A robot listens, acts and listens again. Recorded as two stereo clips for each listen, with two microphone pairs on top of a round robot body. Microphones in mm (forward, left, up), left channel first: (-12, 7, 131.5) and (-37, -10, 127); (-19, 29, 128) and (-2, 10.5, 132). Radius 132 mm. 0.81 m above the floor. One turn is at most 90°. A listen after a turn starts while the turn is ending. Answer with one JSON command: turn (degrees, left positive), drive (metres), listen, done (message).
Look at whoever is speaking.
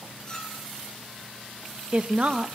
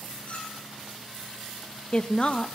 {"turn": 90}
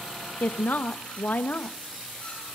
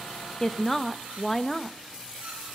{"turn": 60}
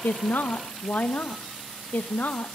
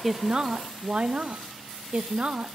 {"done": "Facing the woman speaking."}